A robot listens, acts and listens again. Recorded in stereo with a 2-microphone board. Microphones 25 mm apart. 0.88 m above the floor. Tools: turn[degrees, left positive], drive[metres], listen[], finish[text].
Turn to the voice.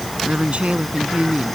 Thought: The woman speaking: about 60° right or 120° right.
Action: turn[-60]
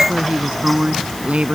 Thought: So it is at 60° right.
Action: turn[-60]
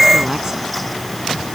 Action: listen[]
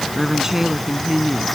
Thought: The woman speaking is now 20° right.
Action: turn[-20]
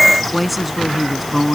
Action: finish[Facing the woman speaking.]